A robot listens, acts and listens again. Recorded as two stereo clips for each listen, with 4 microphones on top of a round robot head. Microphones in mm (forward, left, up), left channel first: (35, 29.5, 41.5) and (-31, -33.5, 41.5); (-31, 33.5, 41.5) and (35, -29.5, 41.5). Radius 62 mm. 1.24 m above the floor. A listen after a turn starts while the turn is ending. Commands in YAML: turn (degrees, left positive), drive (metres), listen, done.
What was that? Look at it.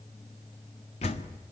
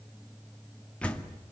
turn: 60
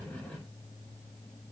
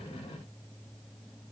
done: "Facing where the door slam came from. I can't hear it now."